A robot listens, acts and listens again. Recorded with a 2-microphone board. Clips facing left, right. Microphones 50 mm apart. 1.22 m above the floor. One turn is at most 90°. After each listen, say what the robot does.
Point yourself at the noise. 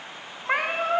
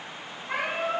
Turn 50° left.
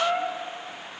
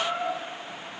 Turn 65° left.
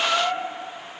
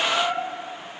Turn 20° left.
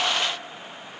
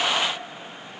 Keep listening.
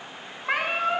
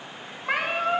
Found it: a cat meowing, straight ahead, under 1 m away.